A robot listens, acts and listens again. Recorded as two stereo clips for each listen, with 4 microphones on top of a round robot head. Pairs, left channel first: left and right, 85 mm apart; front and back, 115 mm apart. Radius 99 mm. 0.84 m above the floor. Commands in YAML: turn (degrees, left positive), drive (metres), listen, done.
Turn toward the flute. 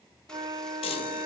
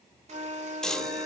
turn: -130
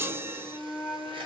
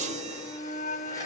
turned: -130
turn: -10
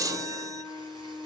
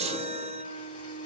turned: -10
done: "Found it: a flute, straight ahead."